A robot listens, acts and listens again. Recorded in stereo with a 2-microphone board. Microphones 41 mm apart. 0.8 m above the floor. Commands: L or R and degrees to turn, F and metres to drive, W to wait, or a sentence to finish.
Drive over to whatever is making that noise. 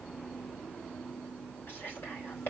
L65
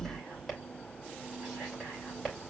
F1.0
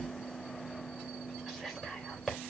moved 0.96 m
F1.0
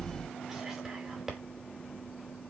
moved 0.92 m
R10
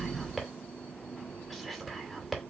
F1.0
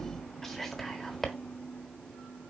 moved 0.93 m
L10
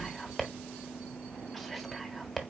F1.0
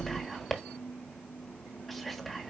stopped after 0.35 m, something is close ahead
I am next to the whispering.